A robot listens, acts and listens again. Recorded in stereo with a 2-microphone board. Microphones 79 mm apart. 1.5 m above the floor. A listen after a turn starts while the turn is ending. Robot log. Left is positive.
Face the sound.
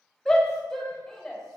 cmd yaw +30
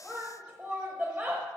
note: So it is at 25° right.
cmd yaw -25
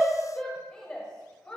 note: The shout is now 10° left.
cmd yaw +10
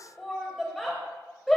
end: Found it: a shout, straight ahead, under 1 m away.